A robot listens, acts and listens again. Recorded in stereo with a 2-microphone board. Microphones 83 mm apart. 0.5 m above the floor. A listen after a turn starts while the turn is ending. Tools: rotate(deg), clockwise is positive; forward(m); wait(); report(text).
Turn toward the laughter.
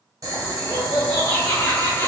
rotate(-25)
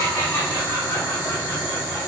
rotate(-35)
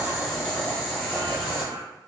wait()
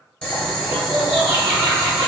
rotate(30)
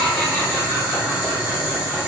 wait()
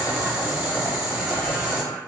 wait()
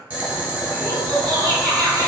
report("Facing the laughter, 2 to 4 m away.")